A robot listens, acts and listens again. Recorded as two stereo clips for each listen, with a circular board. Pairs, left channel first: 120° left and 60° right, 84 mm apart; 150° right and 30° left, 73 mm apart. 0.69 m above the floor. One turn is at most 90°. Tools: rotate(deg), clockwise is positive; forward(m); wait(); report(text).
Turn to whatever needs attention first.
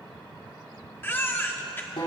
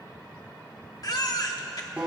rotate(-90)
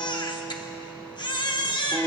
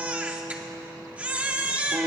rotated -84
rotate(-90)
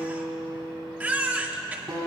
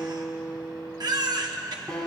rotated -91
rotate(-10)
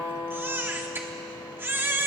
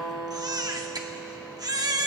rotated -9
report("Found it: a baby crying, straight ahead, 1 to 2 m away.")